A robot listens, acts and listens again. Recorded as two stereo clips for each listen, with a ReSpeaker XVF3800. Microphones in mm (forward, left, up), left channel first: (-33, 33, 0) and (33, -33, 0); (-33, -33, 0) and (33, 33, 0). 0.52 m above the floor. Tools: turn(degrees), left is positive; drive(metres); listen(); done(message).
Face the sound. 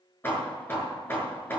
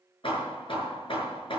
turn(degrees=-160)
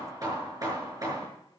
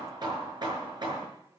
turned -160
done("Found it: hammering, straight ahead.")